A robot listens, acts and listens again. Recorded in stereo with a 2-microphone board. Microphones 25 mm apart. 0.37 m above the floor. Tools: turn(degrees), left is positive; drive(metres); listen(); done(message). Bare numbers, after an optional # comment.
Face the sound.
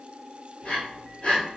# The breathing: about 55° left or 125° left.
turn(55)
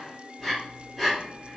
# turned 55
done("Facing the breathing.")